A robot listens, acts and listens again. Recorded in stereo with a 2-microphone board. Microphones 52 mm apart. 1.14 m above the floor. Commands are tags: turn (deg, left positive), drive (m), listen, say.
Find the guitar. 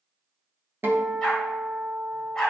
<turn deg="-45"/>
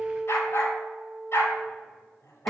<say>Found it: a guitar, straight ahead, 1 to 2 m away.</say>